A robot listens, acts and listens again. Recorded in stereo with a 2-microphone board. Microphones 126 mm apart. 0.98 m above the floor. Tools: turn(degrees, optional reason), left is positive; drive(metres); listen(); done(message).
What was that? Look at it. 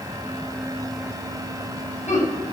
turn(degrees=70, reason="The laughter: about 70° left or 110° left.")
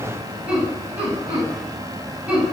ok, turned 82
turn(degrees=-10, reason="So it is at 10° right.")
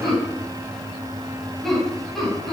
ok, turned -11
done("Facing the laughter.")